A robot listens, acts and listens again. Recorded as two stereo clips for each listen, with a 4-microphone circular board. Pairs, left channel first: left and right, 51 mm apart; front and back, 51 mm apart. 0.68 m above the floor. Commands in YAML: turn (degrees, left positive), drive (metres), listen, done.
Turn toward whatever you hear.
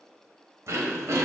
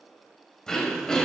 turn: -75
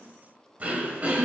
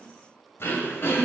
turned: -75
turn: -30
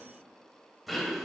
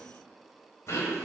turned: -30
done: "Found it: throat clearing, straight ahead, 1 to 2 m away."